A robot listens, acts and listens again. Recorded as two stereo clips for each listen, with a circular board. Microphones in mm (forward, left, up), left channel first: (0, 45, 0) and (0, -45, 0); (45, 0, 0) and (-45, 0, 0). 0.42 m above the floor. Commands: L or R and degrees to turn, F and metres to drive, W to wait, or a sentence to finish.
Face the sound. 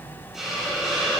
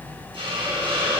R175
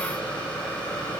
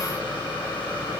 L15
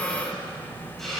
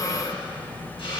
W
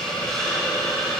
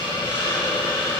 Found it: a hiss, straight ahead.